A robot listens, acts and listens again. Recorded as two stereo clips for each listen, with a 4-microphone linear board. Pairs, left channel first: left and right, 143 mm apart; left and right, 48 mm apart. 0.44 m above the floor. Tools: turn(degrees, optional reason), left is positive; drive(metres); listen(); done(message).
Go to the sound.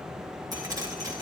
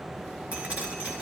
turn(degrees=-25, reason="The dripping: about 25° right or 155° right.")
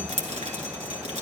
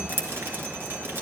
turn(degrees=-125, reason="So it is at 125° right.")
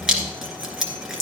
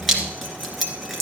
drive(metres=1.0)
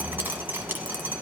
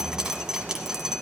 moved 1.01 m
turn(degrees=-15, reason="The dripping is now 15° right.")
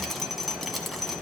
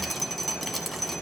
listen()
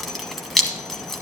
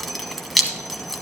drive(metres=1.0)
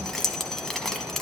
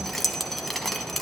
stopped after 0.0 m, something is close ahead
done("Arrived at the dripping, straight ahead.")